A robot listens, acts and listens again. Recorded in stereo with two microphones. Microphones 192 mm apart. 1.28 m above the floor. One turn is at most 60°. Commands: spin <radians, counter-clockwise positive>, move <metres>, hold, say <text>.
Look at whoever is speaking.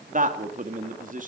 spin -0.79
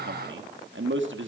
spin -1.05
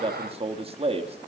spin -0.52
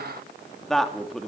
say Facing the man speaking, 2 to 4 m away.